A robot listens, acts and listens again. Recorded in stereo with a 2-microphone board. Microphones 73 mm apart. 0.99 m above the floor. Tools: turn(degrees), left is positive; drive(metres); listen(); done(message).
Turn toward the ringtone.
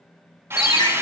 turn(degrees=90)
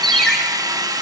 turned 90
turn(degrees=10)
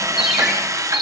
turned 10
done("Facing the ringtone, 2 to 4 m away.")